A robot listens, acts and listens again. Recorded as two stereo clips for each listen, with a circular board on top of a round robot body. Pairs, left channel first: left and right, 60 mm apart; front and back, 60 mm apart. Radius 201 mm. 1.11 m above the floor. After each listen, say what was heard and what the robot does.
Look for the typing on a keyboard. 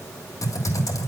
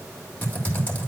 The typing on a keyboard: 60° left. Turn 60° left.
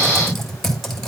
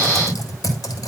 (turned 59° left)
Facing the typing on a keyboard.